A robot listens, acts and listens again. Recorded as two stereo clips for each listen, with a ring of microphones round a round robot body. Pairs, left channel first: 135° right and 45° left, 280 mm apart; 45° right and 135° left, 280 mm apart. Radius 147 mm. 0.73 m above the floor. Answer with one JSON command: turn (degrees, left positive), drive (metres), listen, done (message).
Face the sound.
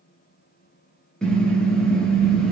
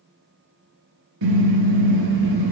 {"turn": 140}
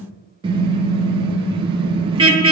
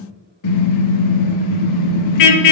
{"turn": -30}
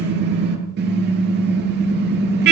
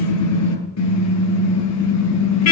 {"turn": -10}
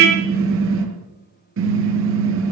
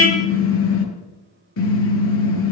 {"done": "Facing the car horn."}